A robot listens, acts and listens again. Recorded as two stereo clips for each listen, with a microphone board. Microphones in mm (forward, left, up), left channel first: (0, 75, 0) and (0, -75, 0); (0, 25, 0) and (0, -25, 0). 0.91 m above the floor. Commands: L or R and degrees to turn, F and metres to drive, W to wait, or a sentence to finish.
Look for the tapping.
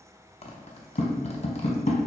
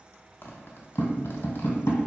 L60
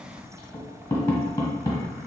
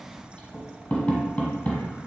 L20
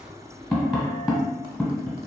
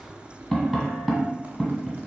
Found it: tapping, straight ahead, 1 to 2 m away.